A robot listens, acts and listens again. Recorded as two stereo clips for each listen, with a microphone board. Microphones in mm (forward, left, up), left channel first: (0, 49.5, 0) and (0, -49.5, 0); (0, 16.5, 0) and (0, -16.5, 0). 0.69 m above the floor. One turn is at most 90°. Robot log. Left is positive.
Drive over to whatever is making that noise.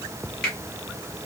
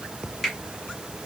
cmd yaw +30
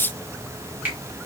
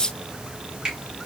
note: So it is at 20° right.
cmd yaw -20
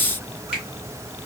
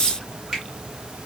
cmd fwd 1.0
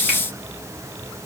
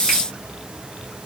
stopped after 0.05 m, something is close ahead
cmd idle
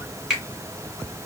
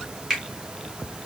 end: Something is in my way. I am facing the finger snap but have not reached it.